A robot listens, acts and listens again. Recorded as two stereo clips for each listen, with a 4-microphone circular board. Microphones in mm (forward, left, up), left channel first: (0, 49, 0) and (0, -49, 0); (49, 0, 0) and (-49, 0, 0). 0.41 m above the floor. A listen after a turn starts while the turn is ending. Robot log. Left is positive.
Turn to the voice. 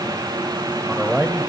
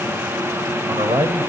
note: The man speaking: 170° right.
cmd yaw -170
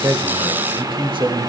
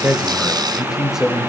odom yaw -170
note: The man speaking is now 100° right.
cmd yaw -100
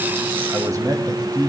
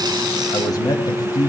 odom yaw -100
note: The man speaking is now 50° right.
cmd yaw -50
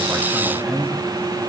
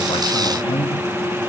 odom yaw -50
end: Found it: a man speaking, straight ahead.